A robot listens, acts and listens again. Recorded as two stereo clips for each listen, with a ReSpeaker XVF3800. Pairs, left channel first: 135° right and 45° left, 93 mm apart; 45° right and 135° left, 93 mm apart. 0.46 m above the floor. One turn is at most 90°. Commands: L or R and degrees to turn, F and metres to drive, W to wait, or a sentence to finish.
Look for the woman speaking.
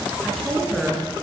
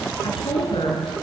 R40
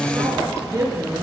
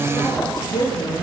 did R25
R10
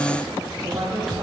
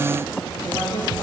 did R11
Facing the woman speaking.